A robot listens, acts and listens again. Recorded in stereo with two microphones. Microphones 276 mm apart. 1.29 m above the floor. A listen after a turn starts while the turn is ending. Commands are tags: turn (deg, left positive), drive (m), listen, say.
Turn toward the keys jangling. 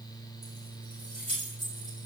<turn deg="-60"/>
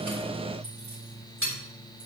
<turn deg="-70"/>
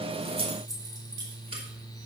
<turn deg="-20"/>
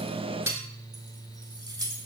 <turn deg="-15"/>
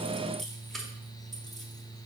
<say>Facing the keys jangling.</say>